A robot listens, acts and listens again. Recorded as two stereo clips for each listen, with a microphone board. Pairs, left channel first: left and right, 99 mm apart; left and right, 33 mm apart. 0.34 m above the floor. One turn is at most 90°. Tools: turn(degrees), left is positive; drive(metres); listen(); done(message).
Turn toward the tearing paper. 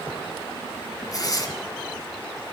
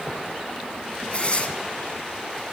turn(degrees=40)
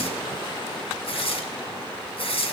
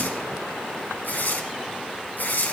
turn(degrees=90)
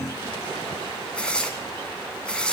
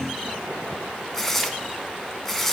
turn(degrees=10)
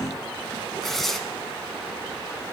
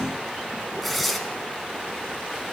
done("Found it: tearing paper, straight ahead, 1 to 2 m away.")